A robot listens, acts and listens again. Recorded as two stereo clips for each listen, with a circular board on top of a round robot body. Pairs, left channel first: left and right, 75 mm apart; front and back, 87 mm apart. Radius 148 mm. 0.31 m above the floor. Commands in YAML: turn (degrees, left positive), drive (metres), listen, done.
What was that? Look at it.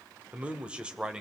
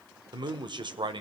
turn: -170
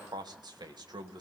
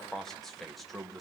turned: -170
turn: -90
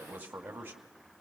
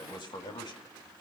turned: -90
turn: -25
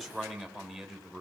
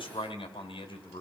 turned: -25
done: "Found it: a man speaking, straight ahead, 2 to 4 m away."